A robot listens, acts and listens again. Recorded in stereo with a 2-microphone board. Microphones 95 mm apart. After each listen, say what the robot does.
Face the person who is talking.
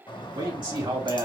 Turn 55° right.
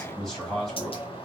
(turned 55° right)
Facing the man speaking, 2 to 4 m away.